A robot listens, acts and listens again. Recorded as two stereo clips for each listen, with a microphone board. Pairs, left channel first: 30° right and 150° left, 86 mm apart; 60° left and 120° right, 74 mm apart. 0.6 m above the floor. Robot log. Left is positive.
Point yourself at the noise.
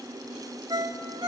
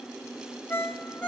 note: The ringtone: 120° left.
cmd yaw +120
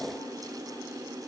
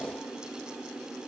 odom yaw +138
note: Nothing new. It was at 15° right.
cmd yaw -15
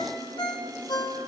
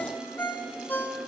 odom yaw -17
end: Facing the ringtone.